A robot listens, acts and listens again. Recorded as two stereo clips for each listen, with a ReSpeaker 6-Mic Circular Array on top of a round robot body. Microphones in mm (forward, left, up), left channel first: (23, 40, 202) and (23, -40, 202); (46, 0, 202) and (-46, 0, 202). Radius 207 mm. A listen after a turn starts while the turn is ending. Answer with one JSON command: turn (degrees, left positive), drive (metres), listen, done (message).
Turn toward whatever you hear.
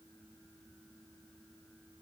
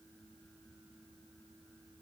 {"listen": true}
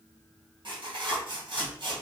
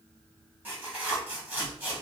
{"turn": -110}
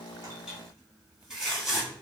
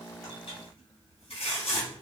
{"turn": -10}
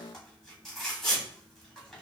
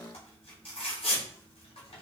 {"done": "Facing the tearing paper, 2 to 4 m away."}